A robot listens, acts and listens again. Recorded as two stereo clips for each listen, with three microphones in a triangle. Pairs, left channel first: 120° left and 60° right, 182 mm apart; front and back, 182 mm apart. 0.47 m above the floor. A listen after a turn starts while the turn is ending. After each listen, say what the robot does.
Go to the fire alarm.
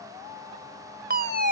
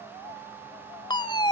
Turn 60° right.
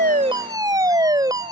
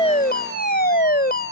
Drive 1.0 m forward.
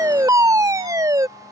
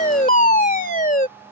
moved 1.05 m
Drive 1.0 m forward.
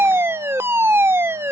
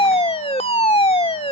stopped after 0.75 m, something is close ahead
I am next to the fire alarm.